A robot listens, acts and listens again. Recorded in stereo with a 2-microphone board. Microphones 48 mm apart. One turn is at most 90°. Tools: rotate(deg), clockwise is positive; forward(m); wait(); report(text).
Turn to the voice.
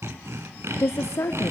rotate(-60)
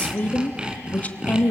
rotate(-35)
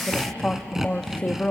rotate(-20)
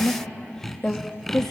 rotate(-10)
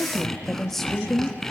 report("Facing the woman speaking, 1 to 2 m away.")